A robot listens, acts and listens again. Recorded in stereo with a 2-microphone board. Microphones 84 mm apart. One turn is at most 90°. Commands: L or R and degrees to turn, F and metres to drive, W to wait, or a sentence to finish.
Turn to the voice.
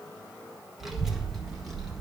L30
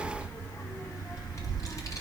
L90
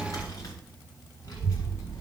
L40
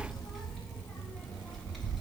Found it: a child speaking, straight ahead.